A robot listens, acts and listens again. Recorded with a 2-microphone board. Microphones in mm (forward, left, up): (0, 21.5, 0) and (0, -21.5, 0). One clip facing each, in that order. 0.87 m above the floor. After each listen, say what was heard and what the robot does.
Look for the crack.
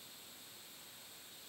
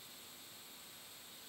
Keep listening.
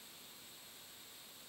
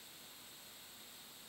Keep listening.
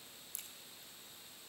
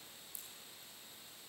Turn 90° left.
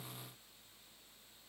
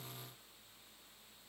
I heard a crack from this way, but can't make it out now.